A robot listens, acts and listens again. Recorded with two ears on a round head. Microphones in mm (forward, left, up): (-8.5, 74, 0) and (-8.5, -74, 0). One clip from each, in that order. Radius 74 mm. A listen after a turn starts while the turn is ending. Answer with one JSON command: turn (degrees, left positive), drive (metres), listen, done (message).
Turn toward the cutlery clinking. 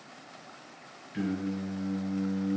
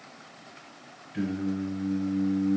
{"listen": true}
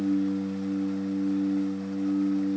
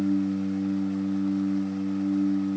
{"listen": true}
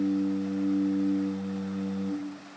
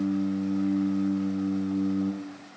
{"done": "I can't make out cutlery clinking, only singing."}